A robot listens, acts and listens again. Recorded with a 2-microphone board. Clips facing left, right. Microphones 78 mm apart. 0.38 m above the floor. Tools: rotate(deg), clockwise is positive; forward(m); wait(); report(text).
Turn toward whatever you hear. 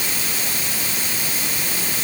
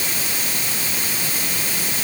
wait()
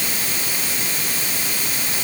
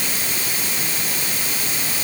wait()
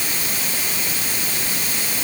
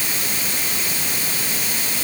report("I can't make out anything to turn to.")